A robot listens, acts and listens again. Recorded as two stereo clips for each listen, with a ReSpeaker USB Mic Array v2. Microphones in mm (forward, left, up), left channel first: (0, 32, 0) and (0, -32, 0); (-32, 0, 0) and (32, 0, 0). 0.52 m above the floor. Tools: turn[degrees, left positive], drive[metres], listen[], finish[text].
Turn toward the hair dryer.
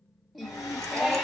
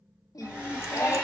Thought: The hair dryer: 70° left.
Action: turn[70]
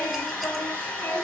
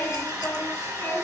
Thought: The hair dryer is now 20° left.
Action: turn[20]
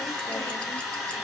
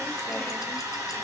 Action: finish[Found it: a hair dryer, straight ahead, 2 to 4 m away.]